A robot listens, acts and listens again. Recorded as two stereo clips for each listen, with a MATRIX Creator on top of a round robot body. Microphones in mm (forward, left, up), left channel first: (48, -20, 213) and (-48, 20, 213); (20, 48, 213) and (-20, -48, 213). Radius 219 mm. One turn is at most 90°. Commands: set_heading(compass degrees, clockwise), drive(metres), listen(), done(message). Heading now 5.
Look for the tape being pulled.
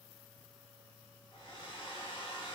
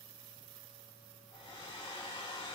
listen()
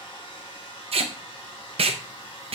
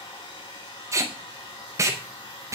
set_heading(95)
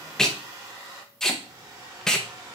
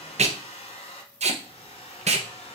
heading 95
set_heading(185)
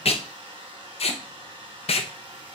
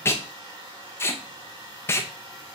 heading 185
done("Found it: tape being pulled, straight ahead.")